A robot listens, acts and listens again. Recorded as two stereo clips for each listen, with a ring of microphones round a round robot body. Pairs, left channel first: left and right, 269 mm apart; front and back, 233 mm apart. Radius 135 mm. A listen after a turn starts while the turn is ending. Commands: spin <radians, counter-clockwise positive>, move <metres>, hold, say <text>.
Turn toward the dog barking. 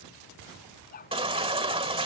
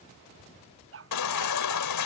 spin 2.62
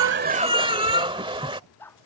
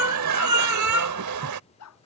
say Found it: a dog barking, straight ahead.